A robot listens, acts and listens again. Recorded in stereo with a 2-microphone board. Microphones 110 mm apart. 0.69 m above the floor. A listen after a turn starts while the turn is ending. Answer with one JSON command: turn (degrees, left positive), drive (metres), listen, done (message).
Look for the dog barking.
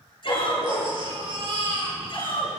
{"turn": 75}
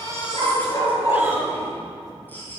{"turn": 35}
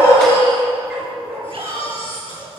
{"done": "Found it: a dog barking, straight ahead, 2 to 4 m away."}